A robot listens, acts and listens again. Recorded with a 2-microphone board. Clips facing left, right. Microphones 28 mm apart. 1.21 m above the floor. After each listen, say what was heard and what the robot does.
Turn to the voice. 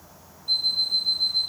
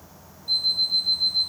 Keep listening.
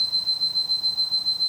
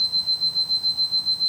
Keep listening.
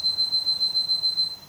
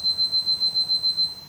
I can't make out anyone speaking, only an alarm clock.